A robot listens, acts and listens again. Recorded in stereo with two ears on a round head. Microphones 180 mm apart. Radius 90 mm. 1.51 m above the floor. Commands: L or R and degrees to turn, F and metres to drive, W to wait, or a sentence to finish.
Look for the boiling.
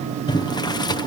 L20
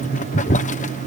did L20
L140
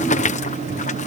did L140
L35
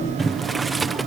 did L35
Found it: boiling, straight ahead.